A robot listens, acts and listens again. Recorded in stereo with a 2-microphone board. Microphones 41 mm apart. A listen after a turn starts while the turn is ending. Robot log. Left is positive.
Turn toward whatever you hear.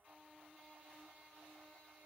cmd idle
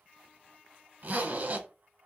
note: The zipper: about 45° right or 135° right.
cmd yaw -45
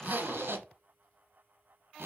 note: So it is at 85° right.
cmd yaw -85
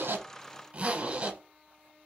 note: The zipper is now 35° right.
cmd yaw -35
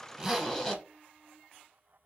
note: The zipper is now 15° left.
cmd yaw +15
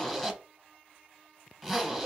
end: Found it: a zipper, straight ahead, under 1 m away.